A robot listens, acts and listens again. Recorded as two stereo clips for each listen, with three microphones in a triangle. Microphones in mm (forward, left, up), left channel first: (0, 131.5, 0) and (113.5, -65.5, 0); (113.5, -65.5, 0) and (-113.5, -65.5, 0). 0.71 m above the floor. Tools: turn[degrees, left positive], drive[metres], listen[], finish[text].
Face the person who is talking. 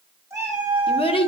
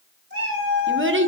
Thought: The child speaking: straight behind.
Action: turn[180]
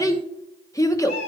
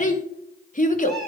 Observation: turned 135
Thought: The child speaking is now 45° left.
Action: turn[45]
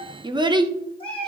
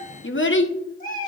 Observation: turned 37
Thought: The child speaking is now 10° left.
Action: turn[10]
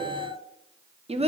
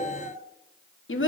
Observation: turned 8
Action: finish[Facing the child speaking, under 1 m away.]